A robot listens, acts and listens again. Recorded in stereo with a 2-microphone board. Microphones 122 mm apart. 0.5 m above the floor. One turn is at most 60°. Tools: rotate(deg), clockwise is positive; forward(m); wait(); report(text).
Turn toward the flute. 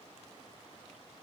wait()
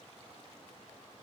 wait()
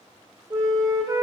rotate(30)
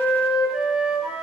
report("Facing the flute, 1 to 2 m away.")